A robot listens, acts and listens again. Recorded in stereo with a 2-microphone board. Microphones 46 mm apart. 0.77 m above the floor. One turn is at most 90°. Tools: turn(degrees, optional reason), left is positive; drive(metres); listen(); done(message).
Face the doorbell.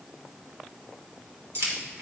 listen()
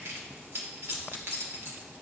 listen()
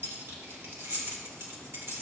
done("I can't make out a doorbell, only keys jangling.")